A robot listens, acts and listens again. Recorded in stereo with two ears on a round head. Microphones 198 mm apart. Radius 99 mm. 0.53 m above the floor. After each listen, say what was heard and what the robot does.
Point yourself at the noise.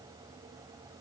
Keep listening.
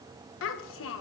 The child speaking: about 60° left or 120° left. Turn 60° left.
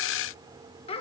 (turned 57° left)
So it is at 30° left. Turn 30° left.
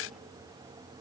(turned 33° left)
Keep listening.
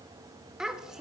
Found it: a child speaking, straight ahead.